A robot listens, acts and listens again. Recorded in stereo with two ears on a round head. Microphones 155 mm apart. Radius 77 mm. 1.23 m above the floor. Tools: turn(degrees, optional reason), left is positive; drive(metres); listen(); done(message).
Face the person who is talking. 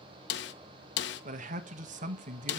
turn(degrees=-45, reason="The man speaking: about 45° right or 135° right.")
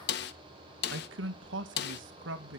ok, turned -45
turn(degrees=-85, reason="So it is at 85° right.")
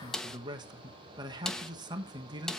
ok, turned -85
turn(degrees=-25, reason="The man speaking is now 25° right.")
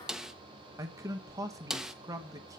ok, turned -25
turn(degrees=-20, reason="The man speaking is now 20° right.")
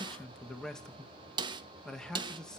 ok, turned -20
done("Found it: a man speaking, straight ahead, 1 to 2 m away.")